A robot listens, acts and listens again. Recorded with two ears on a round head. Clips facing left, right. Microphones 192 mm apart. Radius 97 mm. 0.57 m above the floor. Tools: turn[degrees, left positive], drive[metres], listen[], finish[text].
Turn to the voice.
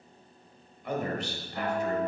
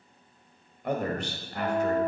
Thought: The man speaking: about 45° right or 135° right.
Action: turn[-45]
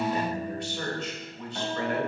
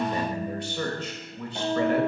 Thought: So it is at 90° right.
Action: turn[-90]
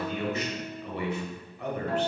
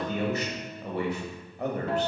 Thought: The man speaking is now 35° right.
Action: turn[-35]
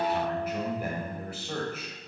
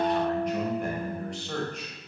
Action: finish[Found it: a man speaking, straight ahead.]